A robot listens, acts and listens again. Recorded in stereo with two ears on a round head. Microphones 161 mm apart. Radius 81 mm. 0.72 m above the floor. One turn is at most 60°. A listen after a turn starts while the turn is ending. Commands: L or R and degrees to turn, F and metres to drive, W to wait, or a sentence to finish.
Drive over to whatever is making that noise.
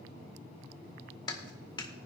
L25
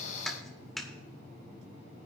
F1.0
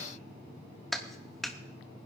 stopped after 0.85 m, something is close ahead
I am next to the clap.